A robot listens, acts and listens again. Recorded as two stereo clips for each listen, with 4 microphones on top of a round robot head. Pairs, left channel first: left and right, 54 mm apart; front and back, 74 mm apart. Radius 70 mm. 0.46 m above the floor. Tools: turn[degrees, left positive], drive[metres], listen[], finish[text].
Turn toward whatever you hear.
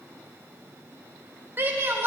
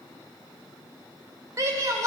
Thought: The shout: 135° right.
Action: turn[-135]
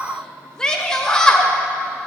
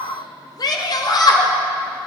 Thought: The shout is now 15° left.
Action: turn[15]
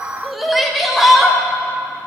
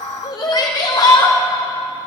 Action: finish[Facing the shout, 2 to 4 m away.]